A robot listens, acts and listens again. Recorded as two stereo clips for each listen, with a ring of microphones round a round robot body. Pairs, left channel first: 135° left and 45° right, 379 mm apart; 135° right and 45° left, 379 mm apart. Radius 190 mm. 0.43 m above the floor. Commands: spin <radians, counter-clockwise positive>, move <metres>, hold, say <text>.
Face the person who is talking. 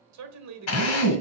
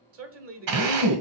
say Facing the man speaking, 1 to 2 m away.